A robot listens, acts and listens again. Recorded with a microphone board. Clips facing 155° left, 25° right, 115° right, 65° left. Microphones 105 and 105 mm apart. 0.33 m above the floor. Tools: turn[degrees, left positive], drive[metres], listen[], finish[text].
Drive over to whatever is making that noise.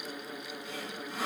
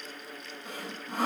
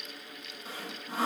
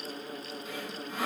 Thought: The sawing: 60° right.
Action: turn[-60]
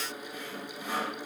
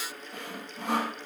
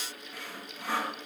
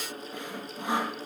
Action: drive[1.0]
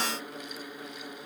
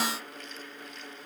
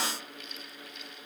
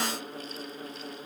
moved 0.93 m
Action: listen[]
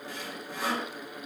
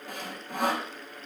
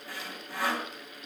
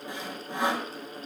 Action: drive[1.0]
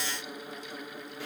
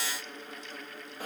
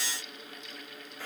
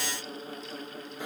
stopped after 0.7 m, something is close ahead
Action: finish[Arrived at the sawing, straight ahead.]